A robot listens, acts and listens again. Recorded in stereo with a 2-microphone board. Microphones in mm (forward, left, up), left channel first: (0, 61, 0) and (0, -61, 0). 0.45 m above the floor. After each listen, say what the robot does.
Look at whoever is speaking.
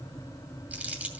Keep listening.
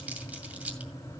Keep listening.
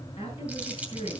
Turn 55° left.
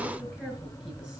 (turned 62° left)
Keep listening.
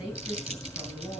Facing the woman speaking.